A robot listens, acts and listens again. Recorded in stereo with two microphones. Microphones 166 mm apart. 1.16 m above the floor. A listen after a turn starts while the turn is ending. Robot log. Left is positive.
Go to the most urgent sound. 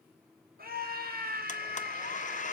note: The scream: about 65° right or 115° right.
cmd yaw -65
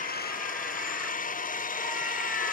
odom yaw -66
cmd idle
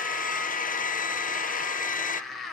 cmd fwd 1.0
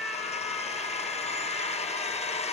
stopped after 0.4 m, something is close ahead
end: Blocked. The scream is further on, straight ahead.